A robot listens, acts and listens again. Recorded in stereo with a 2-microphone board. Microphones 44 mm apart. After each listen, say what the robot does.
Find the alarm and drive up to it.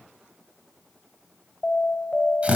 Turn 40° left.
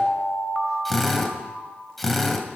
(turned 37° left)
Drive 1.0 m forward.
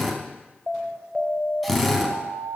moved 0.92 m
Turn 10° left.
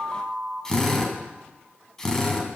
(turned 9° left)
Drive 1.0 m forward.
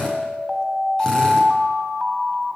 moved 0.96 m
Drive 1.0 m forward.
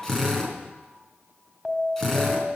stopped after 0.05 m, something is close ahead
Arrived at the alarm, straight ahead.